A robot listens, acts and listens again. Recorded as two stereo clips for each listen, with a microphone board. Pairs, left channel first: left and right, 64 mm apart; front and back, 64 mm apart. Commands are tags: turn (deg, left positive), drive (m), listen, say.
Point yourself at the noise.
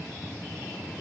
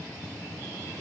<listen/>
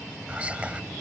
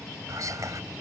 <turn deg="-155"/>
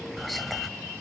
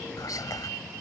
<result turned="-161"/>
<say>Found it: whispering, straight ahead.</say>